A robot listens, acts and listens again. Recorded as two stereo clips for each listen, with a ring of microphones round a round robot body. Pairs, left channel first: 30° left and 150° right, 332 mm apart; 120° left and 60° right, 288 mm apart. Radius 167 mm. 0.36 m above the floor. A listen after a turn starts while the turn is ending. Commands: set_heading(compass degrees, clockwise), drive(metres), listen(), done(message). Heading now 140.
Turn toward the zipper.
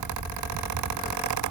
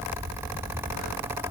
listen()
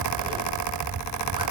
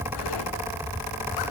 listen()
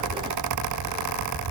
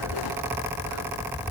done("I can't make out a zipper to turn to.")